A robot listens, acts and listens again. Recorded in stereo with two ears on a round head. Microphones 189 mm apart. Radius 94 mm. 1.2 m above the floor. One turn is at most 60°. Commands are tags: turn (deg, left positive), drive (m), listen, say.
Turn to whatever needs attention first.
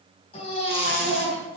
<turn deg="30"/>
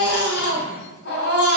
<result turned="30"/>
<turn deg="60"/>
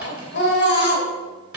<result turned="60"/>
<turn deg="55"/>
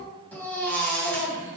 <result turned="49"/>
<say>Found it: a baby crying, straight ahead.</say>